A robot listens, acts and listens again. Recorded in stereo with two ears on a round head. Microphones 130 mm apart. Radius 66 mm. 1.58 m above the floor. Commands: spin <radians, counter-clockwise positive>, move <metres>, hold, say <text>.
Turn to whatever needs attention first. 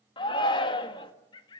spin 0.61
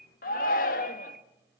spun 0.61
spin 1.92
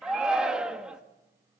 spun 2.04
say Facing the shout.